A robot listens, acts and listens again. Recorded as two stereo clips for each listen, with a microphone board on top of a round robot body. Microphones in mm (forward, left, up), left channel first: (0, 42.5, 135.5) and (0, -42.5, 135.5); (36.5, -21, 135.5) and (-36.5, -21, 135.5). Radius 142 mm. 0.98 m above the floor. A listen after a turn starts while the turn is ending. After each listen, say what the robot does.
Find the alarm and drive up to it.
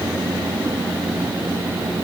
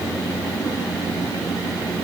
Keep listening.
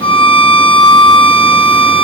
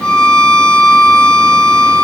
Keep listening.
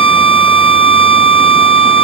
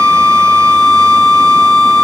I can't make out an alarm to turn to.